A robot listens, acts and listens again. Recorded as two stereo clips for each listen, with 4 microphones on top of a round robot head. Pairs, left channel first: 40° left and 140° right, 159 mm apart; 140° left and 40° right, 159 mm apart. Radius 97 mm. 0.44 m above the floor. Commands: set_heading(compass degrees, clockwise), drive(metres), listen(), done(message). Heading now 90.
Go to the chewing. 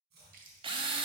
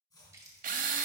set_heading(200)
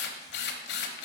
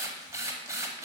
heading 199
listen()
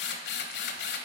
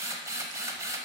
listen()
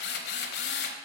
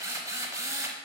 done("I heard chewing from this way, but can't make it out now. I did not reach it.")